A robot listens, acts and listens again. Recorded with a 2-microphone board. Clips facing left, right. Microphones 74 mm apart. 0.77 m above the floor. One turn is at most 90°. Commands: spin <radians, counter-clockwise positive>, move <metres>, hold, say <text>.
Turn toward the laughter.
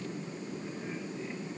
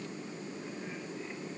hold
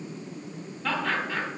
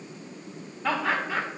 spin -0.52
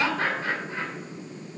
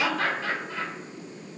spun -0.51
spin 0.61
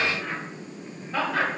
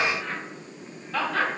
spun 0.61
spin 0.35
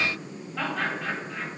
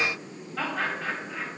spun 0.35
say Facing the laughter.